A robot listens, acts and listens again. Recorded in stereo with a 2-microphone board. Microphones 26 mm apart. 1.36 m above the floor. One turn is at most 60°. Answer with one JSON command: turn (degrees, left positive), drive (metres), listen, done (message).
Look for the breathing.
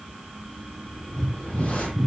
{"turn": 25}
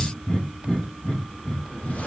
{"turn": 60}
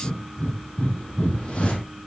{"turn": 60}
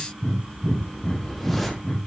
{"turn": 35}
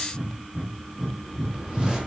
{"done": "Found it: breathing, straight ahead."}